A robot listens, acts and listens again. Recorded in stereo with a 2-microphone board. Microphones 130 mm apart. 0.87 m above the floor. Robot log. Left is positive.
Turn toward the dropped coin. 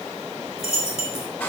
note: The dropped coin: about 55° left or 125° left.
cmd yaw +55
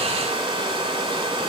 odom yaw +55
cmd idle
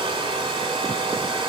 end: I heard a dropped coin, but can't make it out now. It was about straight ahead or 70° left.